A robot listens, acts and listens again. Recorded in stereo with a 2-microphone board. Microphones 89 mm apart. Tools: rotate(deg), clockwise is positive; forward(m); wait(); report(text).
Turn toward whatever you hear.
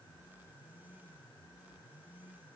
wait()
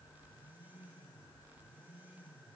wait()
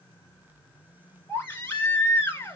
rotate(-25)
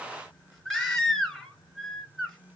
report("Found it: a baby crying, straight ahead.")